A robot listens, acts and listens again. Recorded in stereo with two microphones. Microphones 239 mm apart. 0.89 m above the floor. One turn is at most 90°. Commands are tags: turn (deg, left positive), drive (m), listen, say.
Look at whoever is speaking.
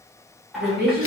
<turn deg="-40"/>
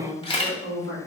<turn deg="-90"/>
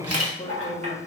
<turn deg="20"/>
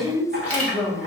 <say>Facing the woman speaking, 1 to 2 m away.</say>